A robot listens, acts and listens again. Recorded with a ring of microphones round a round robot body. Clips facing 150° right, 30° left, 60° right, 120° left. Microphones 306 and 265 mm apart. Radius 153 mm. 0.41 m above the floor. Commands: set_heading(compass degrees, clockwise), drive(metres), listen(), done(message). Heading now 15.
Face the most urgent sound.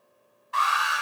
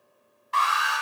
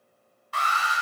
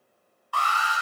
done("Facing the alarm.")